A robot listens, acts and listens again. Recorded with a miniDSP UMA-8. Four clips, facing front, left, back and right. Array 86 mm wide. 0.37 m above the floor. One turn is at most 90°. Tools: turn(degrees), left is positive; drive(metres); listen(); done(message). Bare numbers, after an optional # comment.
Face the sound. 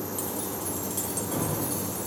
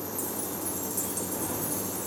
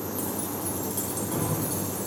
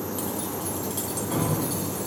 # The keys jangling: 90° right.
turn(-90)
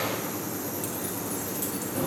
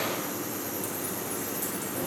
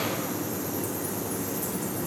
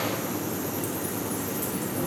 listen()
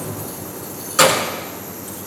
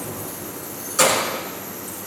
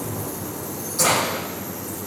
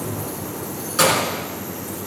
# The keys jangling is now 10° right.
turn(-10)
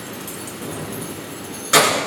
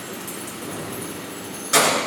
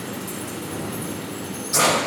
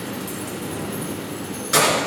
done("Facing the keys jangling, over 4 m away.")